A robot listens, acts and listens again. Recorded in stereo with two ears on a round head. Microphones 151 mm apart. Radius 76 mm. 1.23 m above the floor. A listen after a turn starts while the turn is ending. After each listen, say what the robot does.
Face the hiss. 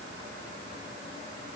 Keep listening.
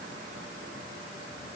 Keep listening.
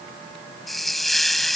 Turn 30° left.
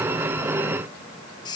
Turn 150° left.
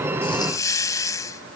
Turn 25° left.
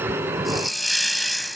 Facing the hiss.